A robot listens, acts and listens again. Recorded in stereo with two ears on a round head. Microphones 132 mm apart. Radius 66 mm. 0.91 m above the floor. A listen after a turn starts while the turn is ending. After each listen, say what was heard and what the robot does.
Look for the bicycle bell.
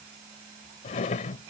Keep listening.
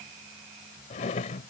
Keep listening.
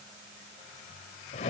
I can't make out a bicycle bell to turn to.